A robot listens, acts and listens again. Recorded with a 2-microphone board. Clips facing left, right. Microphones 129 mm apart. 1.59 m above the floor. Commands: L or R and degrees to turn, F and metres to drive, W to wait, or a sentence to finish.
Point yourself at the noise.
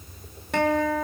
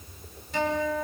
L70
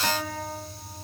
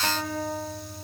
Facing the guitar.